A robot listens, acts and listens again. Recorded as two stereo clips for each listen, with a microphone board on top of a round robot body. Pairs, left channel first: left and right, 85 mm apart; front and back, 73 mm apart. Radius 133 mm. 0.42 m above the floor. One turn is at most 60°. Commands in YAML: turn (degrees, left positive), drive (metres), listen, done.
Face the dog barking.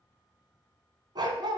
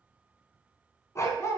turn: -55
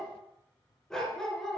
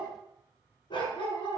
done: "Facing the dog barking, 2 to 4 m away."